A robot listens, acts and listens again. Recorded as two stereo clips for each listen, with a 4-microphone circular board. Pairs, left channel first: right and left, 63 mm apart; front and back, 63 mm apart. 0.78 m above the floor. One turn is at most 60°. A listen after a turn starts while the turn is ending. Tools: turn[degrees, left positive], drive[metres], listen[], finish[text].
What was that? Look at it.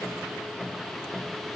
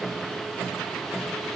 Action: listen[]
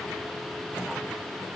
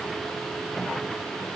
Action: listen[]
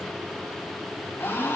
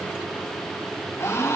Thought: The gasp: 35° right.
Action: turn[-35]
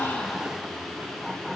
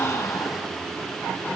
Action: finish[Facing where the gasp came from. I can't hear it now.]